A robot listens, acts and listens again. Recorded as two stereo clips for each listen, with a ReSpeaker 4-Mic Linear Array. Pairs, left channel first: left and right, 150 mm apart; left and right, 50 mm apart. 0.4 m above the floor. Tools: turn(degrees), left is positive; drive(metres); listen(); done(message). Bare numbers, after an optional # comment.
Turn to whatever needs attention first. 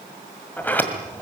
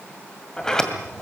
listen()
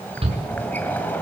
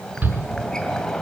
# The shout: about 35° right or 145° right.
turn(-35)
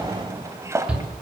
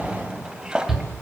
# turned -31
done("Found it: a shout, straight ahead, over 4 m away.")